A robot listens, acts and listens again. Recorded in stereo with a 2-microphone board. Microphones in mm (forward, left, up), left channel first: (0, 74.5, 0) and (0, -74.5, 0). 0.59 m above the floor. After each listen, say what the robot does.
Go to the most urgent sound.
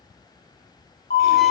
Turn 90° left.
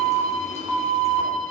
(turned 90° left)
Turn 15° right.
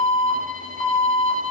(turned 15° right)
Drive 1.0 m forward.
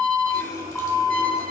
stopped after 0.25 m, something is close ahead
Turn 10° left.
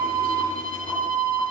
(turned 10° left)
Blocked. The alarm is further on, straight ahead.